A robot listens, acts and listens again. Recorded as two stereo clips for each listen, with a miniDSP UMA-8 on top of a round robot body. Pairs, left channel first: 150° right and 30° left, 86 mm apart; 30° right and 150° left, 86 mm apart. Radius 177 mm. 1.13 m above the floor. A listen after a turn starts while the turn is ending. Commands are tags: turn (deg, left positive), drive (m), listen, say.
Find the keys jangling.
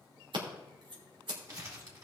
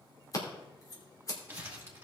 <listen/>
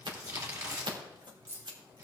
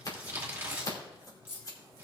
<turn deg="-25"/>
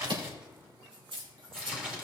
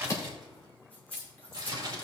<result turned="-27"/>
<turn deg="25"/>
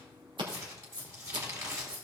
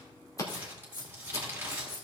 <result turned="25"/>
<turn deg="15"/>
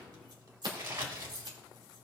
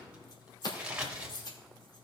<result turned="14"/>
<say>Found it: keys jangling, straight ahead.</say>